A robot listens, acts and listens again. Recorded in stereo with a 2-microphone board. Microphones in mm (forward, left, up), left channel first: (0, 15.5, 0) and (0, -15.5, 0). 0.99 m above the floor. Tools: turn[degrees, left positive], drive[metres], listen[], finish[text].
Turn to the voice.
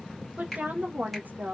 Thought: The woman speaking: about 65° right or 115° right.
Action: turn[-65]
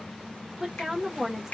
Thought: So it is at 10° right.
Action: turn[-10]
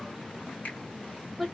Action: finish[Facing the woman speaking, under 1 m away.]